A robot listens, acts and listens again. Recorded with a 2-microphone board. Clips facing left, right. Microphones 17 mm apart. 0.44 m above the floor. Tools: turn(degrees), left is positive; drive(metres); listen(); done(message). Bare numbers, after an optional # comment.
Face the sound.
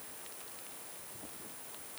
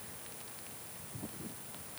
listen()
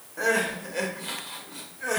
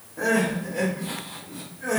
# The crying: about 50° left or 130° left.
turn(50)
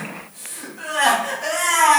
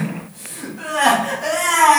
# So it is at 15° left.
turn(15)
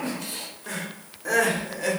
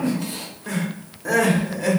done("Facing the crying, under 1 m away.")